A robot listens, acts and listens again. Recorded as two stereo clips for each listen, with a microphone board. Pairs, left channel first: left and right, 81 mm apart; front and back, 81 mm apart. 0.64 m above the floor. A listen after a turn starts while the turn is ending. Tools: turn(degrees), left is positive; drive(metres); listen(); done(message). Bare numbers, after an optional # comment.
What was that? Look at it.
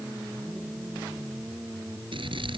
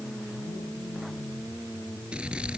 # The scissors: 100° right.
turn(-100)
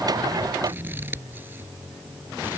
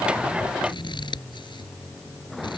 # The scissors is now 25° right.
turn(-25)
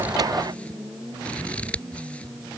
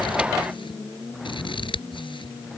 # The scissors is now 15° left.
turn(15)
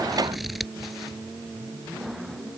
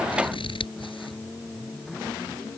done("Found it: scissors, straight ahead.")